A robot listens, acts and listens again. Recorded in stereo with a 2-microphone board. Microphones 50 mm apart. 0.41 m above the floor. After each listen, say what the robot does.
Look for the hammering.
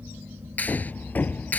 Turn 35° left.
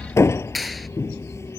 Turn 110° left.
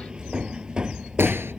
Turn 15° right.
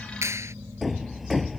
Facing the hammering.